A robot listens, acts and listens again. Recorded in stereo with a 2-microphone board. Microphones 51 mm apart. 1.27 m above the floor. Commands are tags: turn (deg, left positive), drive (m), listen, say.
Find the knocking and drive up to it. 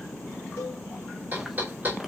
<turn deg="-35"/>
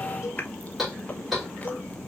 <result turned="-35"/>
<drive m="1.0"/>
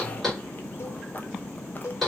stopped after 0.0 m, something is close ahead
<say>Something is in my way. I am facing the knocking but have not reached it.</say>